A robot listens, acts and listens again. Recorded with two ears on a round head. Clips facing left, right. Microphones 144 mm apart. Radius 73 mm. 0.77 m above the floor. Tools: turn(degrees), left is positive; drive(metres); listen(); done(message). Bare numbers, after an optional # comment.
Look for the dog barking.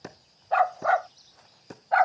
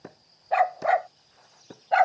# The dog barking: about 30° right or 150° right.
turn(-30)
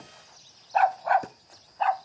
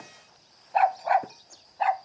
# So it is at 10° right.
turn(-10)
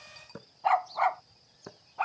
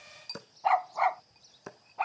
done("Found it: a dog barking, straight ahead.")